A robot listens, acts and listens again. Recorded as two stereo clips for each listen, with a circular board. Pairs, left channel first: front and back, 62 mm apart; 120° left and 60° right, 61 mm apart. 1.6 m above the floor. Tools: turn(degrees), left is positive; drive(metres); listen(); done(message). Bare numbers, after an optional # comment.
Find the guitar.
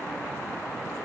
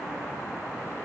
listen()
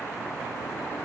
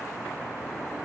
listen()
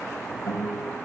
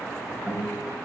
# The guitar: 20° left.
turn(20)
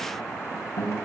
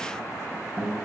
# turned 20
done("Found it: a guitar, straight ahead.")